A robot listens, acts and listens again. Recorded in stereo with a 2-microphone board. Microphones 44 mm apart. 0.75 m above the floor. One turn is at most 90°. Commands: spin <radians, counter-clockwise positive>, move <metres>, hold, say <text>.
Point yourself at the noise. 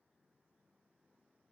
hold
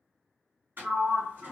spin -0.96
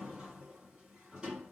spin -0.44
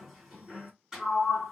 spin -0.17
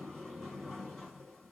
say Found it: a sliding door, straight ahead.